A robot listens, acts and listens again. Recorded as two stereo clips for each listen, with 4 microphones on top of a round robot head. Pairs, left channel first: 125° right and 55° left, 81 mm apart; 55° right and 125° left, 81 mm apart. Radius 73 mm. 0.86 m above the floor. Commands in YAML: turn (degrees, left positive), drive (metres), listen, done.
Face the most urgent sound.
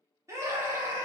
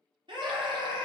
turn: 105
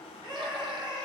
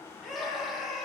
turn: 35
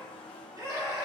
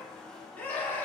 turn: 15
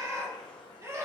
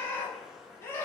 done: "Facing the scream, 1 to 2 m away."